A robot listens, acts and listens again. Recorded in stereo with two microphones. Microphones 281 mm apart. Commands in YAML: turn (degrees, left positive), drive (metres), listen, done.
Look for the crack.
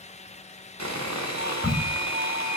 turn: -30
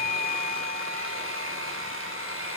listen: true
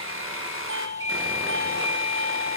done: "I heard a crack, but can't make it out now. It was about 25° left or 145° right."